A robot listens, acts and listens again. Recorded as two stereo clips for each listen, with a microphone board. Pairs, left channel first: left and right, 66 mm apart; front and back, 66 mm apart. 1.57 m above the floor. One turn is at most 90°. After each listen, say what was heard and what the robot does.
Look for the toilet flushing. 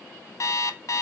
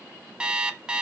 Keep listening.
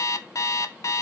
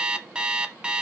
Keep listening.
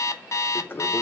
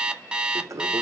The toilet flushing: 145° left. Turn 90° left.
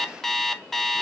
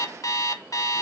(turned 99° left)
Nothing new. It was at 45° left. Turn 45° left.
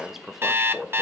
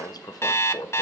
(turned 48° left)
Facing the toilet flushing, under 1 m away.